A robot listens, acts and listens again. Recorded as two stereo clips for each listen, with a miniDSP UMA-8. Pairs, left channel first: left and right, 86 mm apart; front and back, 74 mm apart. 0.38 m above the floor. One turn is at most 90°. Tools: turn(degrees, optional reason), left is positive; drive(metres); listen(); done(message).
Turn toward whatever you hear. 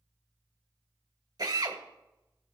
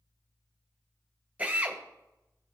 turn(degrees=-90, reason="The drill: 110° right.")
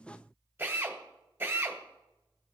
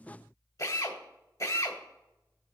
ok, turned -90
turn(degrees=-25, reason="The drill is now 25° right.")
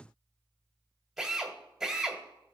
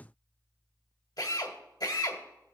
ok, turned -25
done("Facing the drill, 1 to 2 m away.")